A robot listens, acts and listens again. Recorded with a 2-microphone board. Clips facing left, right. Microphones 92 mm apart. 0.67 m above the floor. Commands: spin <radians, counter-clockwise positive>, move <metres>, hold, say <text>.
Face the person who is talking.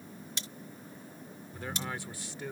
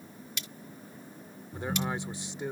spin -0.35
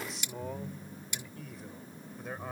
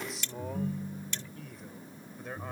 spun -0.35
say Found it: a man speaking, straight ahead.